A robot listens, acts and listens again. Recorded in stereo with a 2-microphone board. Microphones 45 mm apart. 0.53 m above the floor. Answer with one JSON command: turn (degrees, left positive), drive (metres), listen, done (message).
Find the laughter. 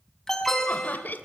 {"turn": 45}
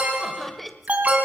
{"done": "Found it: laughter, straight ahead, 1 to 2 m away."}